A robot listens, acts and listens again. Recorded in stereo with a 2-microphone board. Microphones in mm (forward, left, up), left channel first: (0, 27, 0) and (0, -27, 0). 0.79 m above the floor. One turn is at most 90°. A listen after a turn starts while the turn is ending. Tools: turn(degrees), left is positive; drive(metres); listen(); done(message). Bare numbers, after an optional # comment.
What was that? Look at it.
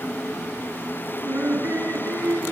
# The laughter: about 50° right or 130° right.
turn(-50)
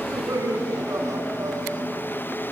# So it is at 85° right.
turn(-85)
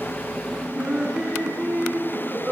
# The laughter is now 20° right.
turn(-20)
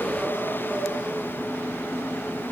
listen()
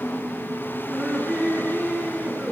# The laughter is now 10° right.
turn(-10)
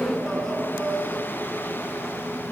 done("Found it: laughter, straight ahead, over 4 m away.")